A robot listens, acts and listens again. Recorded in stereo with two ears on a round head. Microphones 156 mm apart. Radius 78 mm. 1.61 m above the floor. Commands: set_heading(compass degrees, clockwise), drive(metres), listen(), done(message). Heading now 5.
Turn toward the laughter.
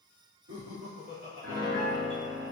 set_heading(95)
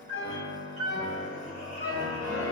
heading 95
listen()
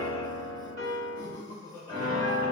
set_heading(105)
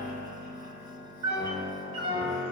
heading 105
listen()
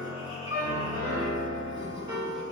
listen()
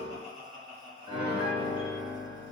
done("Found it: laughter, straight ahead, 2 to 4 m away.")